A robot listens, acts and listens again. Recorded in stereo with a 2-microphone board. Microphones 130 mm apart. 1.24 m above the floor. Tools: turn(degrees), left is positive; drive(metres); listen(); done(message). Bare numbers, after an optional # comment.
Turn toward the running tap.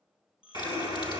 # The running tap: about 35° left or 145° left.
turn(35)
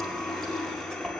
done("Found it: a running tap, straight ahead, 2 to 4 m away.")